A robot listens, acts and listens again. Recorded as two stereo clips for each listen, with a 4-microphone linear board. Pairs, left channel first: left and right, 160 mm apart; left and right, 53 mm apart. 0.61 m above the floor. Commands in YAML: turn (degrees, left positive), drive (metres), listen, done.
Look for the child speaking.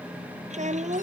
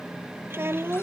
turn: -50
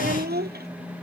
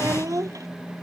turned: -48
turn: -85
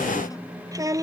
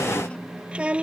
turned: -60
turn: -20
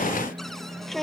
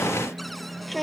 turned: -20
done: "Facing the child speaking."